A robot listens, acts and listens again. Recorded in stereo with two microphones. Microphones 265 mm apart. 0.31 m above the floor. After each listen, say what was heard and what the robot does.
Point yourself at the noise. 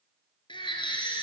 The baby crying: about 15° left or 165° left. Turn 15° left.
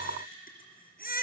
So it is at 150° left. Turn 150° left.
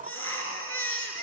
The baby crying is now 50° left. Turn 50° left.
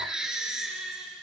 Found it: a baby crying, straight ahead, 2 to 4 m away.